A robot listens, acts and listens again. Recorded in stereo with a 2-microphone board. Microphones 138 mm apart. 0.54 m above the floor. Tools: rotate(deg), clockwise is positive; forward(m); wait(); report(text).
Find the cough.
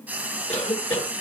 rotate(-45)
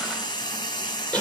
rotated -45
rotate(-10)
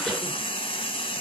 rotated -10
wait()
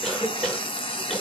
report("Found it: a cough, straight ahead, 1 to 2 m away.")